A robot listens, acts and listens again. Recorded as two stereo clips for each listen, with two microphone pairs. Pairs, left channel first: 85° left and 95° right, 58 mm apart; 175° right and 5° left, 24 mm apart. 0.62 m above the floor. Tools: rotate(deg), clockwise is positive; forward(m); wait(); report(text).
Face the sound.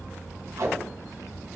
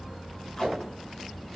rotate(105)
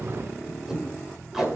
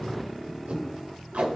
report("Facing the tape being pulled.")